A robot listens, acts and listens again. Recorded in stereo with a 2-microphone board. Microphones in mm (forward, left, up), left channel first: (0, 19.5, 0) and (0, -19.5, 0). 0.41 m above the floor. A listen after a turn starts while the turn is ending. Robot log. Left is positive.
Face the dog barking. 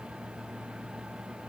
cmd idle
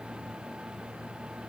cmd idle
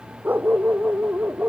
note: The dog barking: about 45° right or 135° right.
cmd yaw -45
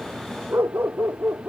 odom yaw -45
note: So it is at 90° right.
cmd yaw -90
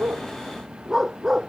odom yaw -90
note: The dog barking is now 10° right.
cmd yaw -10
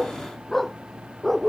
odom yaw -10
end: Facing the dog barking.